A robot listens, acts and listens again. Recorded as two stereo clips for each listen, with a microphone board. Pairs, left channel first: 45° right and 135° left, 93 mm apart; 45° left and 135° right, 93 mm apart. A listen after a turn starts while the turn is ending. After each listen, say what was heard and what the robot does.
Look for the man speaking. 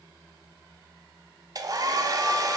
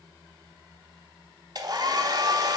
Keep listening.
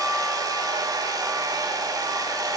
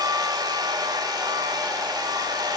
Keep listening.
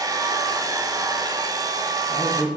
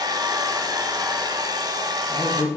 Facing the man speaking.